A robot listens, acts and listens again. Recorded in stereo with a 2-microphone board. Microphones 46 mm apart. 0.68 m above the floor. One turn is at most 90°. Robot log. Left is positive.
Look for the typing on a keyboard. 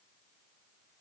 cmd idle
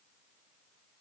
cmd idle
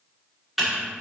cmd yaw -30
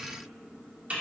note: So it is at 145° right.
cmd yaw -90
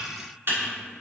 note: The typing on a keyboard is now 60° right.
cmd yaw -60
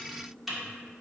end: Found it: typing on a keyboard, straight ahead.